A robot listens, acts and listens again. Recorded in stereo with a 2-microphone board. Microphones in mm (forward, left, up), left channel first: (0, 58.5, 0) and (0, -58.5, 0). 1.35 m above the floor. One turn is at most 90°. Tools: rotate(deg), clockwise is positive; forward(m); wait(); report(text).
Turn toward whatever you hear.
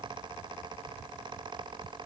wait()
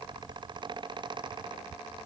wait()
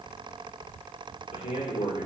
rotate(-90)
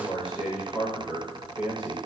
rotate(10)
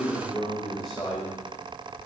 report("Facing the man speaking.")